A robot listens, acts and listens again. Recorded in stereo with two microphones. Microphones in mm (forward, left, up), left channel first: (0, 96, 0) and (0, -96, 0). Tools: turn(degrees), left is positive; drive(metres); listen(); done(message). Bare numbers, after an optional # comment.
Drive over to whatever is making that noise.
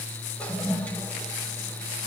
turn(30)
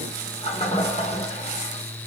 # So it is at 145° left.
turn(145)
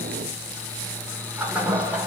drive(1.0)
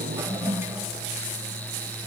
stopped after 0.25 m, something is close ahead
# The toilet flushing is now 10° right.
turn(-10)
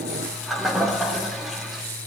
done("Blocked. The toilet flushing is further on, straight ahead.")